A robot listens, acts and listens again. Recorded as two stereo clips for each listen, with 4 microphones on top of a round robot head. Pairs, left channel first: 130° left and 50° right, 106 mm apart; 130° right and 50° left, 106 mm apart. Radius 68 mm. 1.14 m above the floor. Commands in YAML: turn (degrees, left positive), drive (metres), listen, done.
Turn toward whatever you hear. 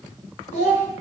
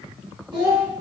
turn: 105
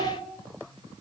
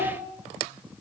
listen: true
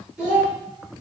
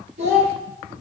turn: 30
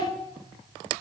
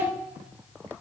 listen: true
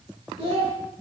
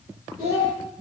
done: "Facing the child speaking."